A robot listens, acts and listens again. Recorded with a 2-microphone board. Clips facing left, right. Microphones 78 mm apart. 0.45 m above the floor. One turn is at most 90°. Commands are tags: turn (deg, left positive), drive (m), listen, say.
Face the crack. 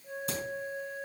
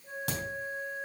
<turn deg="-70"/>
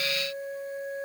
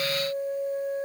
<listen/>
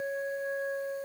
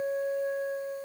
<say>I heard a crack, but can't make it out now. It was about straight ahead or 40° right.</say>